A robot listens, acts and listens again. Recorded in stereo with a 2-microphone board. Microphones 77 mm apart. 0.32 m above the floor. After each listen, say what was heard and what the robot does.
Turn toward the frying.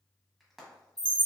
Turn 30° left.
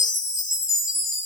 Keep listening.
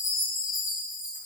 Keep listening.
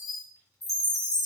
I heard frying, but can't make it out now. It was about 30° right or 150° left.